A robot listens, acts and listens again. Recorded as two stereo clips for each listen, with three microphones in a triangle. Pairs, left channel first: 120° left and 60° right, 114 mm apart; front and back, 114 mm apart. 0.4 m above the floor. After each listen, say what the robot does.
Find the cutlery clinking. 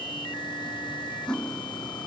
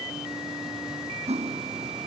Turn 155° right.
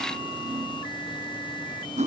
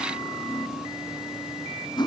Turn 50° right.
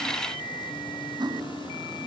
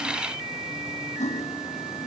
Found it: cutlery clinking, straight ahead.